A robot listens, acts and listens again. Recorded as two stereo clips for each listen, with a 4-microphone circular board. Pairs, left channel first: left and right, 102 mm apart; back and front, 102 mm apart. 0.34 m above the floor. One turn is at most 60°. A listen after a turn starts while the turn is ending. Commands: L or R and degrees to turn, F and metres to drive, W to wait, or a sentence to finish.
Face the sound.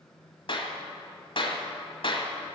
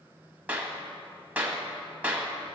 L60
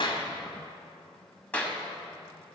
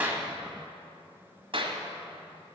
L15
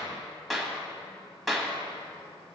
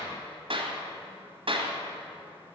Facing the clap, 1 to 2 m away.